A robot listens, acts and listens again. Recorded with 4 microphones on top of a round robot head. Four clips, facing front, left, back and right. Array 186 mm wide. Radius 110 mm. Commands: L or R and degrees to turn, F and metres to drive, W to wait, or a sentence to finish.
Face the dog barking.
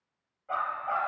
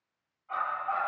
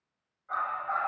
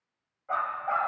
R60
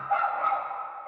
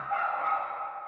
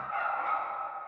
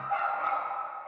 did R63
R10
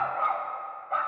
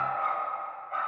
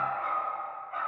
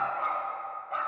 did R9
R10
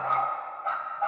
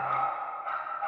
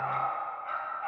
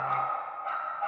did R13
Found it: a dog barking, straight ahead, 2 to 4 m away.